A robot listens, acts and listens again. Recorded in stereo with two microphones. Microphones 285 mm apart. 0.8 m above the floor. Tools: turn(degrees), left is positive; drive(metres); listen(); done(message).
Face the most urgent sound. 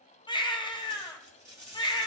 turn(degrees=15)
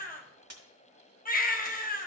turn(degrees=150)
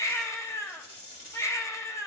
turn(degrees=10)
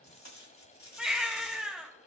done("Facing the baby crying, under 1 m away.")